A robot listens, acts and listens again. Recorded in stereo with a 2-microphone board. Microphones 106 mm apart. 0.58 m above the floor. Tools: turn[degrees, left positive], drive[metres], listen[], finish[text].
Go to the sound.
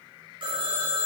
Thought: The phone ringing: about 55° right or 125° right.
Action: turn[-55]
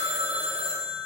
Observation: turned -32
Thought: So it is at 90° right.
Action: turn[-90]
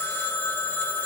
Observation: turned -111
Thought: The phone ringing is now 20° left.
Action: turn[20]
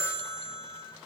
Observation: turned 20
Action: drive[1.0]
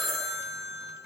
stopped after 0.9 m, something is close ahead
Action: finish[Arrived at the phone ringing, straight ahead.]